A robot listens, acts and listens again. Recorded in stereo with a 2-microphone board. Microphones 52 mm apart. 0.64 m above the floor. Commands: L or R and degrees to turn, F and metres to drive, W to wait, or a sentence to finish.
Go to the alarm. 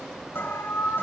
L45
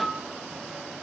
F1.0
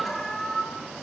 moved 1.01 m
F1.0
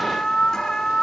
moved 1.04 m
L15
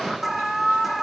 F1.0
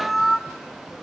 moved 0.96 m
F1.0
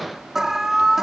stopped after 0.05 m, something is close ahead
R10
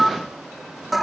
I am next to the alarm.